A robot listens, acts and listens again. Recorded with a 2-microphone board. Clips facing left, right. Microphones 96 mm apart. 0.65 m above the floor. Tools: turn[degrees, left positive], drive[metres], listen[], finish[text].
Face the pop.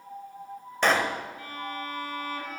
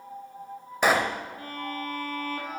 Action: turn[-30]
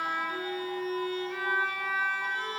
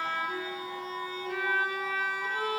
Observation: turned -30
Action: listen[]
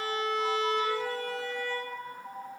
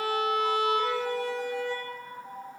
Action: finish[I heard a pop, but can't make it out now. It was about 20° left or 140° right.]